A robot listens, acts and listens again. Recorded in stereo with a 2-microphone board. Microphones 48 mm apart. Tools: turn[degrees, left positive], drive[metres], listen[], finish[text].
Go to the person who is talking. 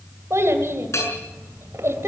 Thought: The child speaking: about 70° right or 110° right.
Action: turn[-70]
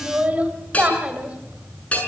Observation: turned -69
Thought: So it is at 30° right.
Action: turn[-30]
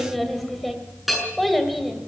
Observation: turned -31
Action: drive[1.0]
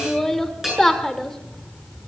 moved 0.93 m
Thought: The child speaking is now 10° left.
Action: turn[10]
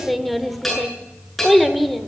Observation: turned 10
Action: drive[1.0]
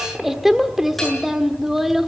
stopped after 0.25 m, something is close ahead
Thought: The child speaking is now 10° right.
Action: turn[-10]
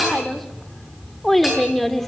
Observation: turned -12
Action: finish[Arrived at the child speaking, straight ahead.]